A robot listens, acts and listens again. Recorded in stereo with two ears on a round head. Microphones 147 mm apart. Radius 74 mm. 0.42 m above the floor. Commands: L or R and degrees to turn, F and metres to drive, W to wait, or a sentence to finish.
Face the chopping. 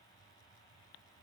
W
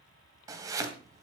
R20
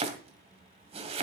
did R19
R140
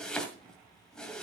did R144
Facing the chopping.